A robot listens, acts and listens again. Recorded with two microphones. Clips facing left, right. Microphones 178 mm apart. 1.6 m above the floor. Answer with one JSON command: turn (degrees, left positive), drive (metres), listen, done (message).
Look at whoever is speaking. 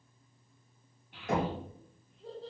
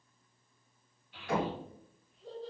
{"turn": 65}
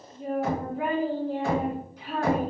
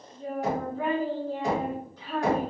{"turn": 15}
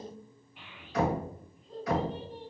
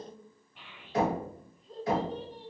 {"done": "Found it: a child speaking, straight ahead."}